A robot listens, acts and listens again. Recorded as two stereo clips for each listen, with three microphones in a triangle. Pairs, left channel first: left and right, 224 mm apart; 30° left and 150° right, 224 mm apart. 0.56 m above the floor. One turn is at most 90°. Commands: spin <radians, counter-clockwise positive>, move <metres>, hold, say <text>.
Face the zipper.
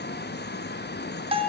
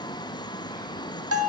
hold
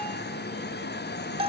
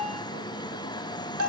hold
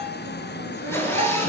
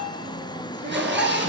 spin 1.57
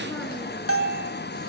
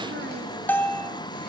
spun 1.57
spin 1.40
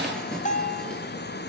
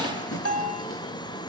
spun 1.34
hold
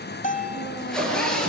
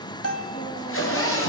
say Facing the zipper, over 4 m away.